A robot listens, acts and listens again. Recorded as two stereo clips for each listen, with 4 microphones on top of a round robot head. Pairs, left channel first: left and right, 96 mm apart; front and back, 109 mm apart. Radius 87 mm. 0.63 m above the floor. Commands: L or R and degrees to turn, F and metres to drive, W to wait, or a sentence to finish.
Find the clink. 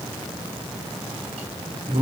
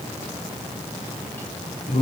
W
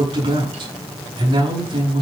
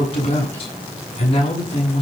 W
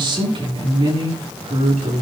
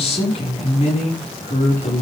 I can't make out a clink to turn to.